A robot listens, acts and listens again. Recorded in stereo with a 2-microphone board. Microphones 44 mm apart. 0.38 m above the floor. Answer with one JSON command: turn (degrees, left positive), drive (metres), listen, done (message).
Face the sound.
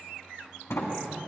{"turn": 90}
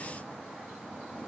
{"listen": true}
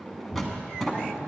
{"done": "Facing the sliding door, 1 to 2 m away."}